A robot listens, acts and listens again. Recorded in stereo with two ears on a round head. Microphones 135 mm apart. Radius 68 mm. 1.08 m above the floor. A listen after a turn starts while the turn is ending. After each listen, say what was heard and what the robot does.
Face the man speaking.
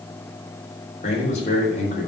The man speaking: about 50° left or 130° left. Turn 50° left.
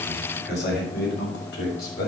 So it is at 75° left. Turn 75° left.
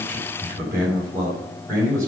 The man speaking is now 20° right. Turn 20° right.
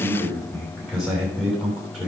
Found it: a man speaking, straight ahead, over 4 m away.